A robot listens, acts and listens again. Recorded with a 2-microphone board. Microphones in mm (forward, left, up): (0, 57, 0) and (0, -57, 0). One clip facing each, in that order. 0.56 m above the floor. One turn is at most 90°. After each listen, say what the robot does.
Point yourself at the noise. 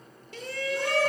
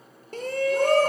Turn 45° right.
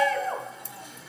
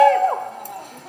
Turn 85° right.
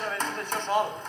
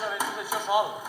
Turn 10° right.
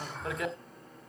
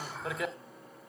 Found it: a shout, straight ahead.